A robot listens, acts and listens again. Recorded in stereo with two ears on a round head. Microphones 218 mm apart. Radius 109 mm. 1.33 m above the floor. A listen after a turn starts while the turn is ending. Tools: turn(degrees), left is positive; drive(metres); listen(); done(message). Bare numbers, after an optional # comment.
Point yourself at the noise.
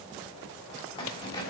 # The keys jangling: about 20° left or 160° left.
turn(20)
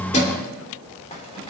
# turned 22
listen()
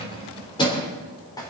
# The keys jangling: about 15° left or 165° left.
turn(15)
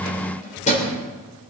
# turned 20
# The keys jangling: about 30° left or 150° left.
turn(30)
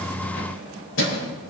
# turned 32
# So it is at 125° left.
turn(125)
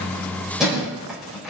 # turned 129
done("Facing the keys jangling, over 4 m away.")